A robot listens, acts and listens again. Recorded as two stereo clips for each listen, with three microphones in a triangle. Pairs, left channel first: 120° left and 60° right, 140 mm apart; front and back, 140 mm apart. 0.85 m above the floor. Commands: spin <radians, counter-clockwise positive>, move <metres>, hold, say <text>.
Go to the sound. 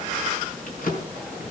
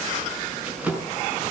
spin 1.75
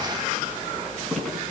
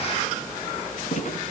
spin 0.61
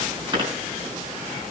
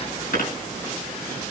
move 1.0
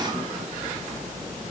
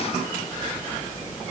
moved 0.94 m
hold
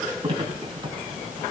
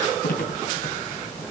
move 1.0
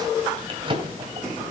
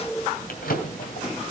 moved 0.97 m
move 1.0
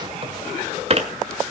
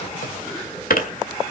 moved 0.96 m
spin -0.26
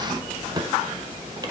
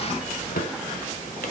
move 1.0
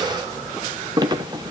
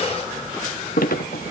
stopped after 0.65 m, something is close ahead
say Arrived at the drawer, straight ahead.